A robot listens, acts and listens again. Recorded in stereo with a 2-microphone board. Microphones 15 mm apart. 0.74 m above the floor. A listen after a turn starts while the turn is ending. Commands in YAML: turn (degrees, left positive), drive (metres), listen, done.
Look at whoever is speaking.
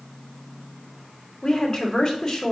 turn: 35
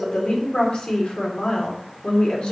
turn: 105
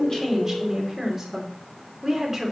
turn: -25
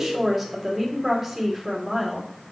done: "Found it: a woman speaking, straight ahead."